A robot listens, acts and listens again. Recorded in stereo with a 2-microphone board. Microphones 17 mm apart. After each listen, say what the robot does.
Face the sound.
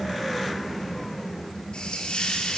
Turn 90° left.
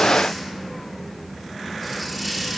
Found it: a hiss, straight ahead.